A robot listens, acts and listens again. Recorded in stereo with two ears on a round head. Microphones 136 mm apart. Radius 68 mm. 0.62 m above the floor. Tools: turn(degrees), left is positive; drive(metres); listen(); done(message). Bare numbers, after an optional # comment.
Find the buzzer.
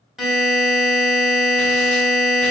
turn(-30)
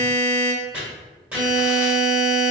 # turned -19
# So it is at 15° left.
turn(15)
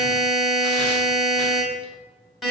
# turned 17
done("Facing the buzzer.")